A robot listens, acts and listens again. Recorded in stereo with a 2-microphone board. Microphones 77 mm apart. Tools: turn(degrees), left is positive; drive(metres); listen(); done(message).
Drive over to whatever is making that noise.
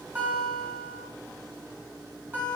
turn(degrees=-25)
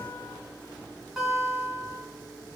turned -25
drive(metres=1.0)
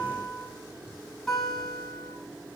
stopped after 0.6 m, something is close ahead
done("Blocked. The guitar is further on, straight ahead.")